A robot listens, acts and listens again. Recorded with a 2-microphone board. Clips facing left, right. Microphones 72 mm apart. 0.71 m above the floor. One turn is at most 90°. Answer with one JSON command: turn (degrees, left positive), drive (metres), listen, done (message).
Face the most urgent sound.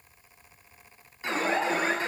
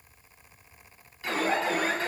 {"turn": 20}
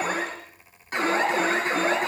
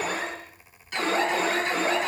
{"turn": 90}
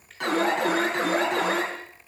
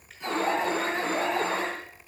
{"turn": 75}
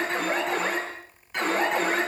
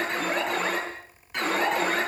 {"done": "Facing the alarm."}